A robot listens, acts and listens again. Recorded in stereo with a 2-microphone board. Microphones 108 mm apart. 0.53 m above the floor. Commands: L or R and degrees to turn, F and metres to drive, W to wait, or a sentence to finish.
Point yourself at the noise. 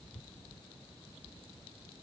W
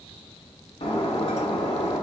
L65
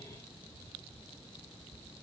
W
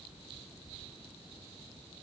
I heard breaking glass, but can't make it out now. It was about straight ahead or 50° left.